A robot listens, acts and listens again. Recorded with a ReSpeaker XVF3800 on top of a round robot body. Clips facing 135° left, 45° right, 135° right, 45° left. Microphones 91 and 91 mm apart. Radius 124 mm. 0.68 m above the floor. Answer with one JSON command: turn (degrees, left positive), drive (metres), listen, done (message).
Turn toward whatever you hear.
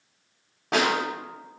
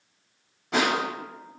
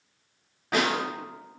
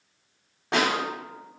{"turn": 115}
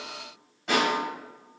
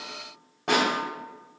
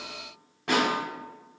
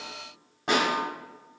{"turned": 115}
{"turn": -20}
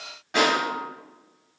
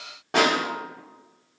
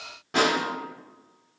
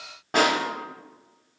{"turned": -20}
{"done": "Facing the snare drum."}